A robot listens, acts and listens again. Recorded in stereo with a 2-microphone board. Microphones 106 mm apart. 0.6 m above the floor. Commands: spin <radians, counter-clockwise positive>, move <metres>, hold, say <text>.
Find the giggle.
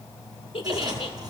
spin 1.05
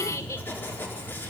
spin 0.61
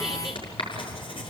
hold
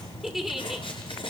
say Found it: a giggle, straight ahead.